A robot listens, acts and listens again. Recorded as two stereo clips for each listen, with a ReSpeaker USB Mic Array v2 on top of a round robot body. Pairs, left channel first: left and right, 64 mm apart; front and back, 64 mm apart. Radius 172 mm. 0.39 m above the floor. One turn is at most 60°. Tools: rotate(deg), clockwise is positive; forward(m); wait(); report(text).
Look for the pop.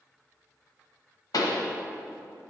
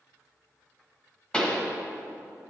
rotate(-60)
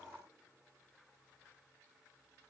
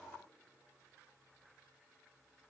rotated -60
rotate(-15)
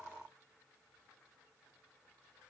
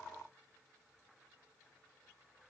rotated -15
report("I heard a pop from this way, but can't make it out now.")